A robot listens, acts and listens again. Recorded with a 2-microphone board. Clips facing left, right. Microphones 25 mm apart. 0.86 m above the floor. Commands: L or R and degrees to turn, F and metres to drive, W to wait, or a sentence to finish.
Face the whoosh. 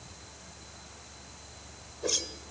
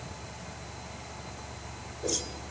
L30
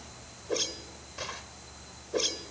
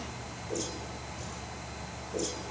L120
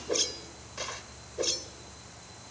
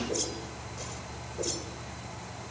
L35
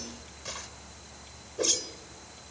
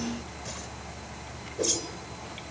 L10
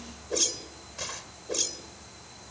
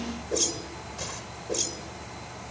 Facing the whoosh.